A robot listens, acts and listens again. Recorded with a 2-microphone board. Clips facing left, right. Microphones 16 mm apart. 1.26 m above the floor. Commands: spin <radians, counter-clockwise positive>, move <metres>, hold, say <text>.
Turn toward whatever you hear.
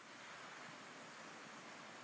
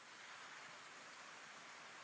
hold
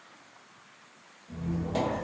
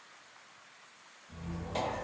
spin 0.35
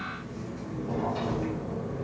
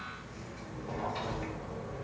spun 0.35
say Found it: a squeak, straight ahead.